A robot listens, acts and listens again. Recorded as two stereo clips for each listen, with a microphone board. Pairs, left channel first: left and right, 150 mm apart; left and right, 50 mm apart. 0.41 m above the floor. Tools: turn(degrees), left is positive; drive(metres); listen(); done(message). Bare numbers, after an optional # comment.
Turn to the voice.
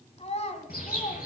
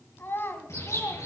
# The child speaking: about 50° left or 130° left.
turn(50)
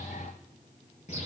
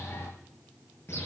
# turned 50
listen()
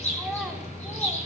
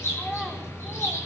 listen()
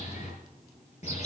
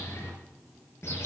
done("I heard a child speaking, but can't make it out now. It was about straight ahead or 80° left.")